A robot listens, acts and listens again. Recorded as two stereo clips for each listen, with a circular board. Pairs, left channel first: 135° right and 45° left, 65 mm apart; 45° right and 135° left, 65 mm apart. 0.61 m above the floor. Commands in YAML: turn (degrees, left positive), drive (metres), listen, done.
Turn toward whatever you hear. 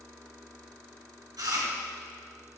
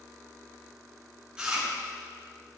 turn: 60
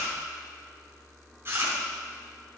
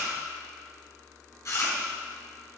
done: "Found it: chewing, straight ahead, 2 to 4 m away."